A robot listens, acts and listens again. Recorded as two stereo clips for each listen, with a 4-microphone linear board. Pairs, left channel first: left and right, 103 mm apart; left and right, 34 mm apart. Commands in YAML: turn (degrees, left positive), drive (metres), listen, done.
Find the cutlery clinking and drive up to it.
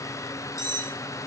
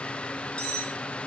turn: 30
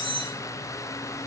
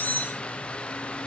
turn: 120
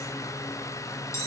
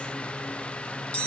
turn: 35
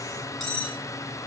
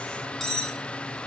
drive: 1.0
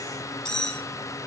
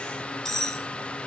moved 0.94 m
turn: 10
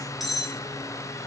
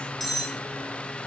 drive: 1.0
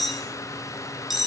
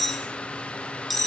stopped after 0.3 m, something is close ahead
done: "Arrived at the cutlery clinking, straight ahead."